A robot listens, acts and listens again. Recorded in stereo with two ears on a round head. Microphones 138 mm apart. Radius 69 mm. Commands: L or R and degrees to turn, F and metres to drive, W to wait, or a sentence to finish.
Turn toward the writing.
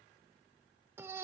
W
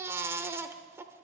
W
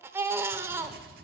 R65
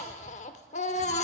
W
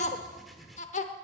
Facing the writing, 1 to 2 m away.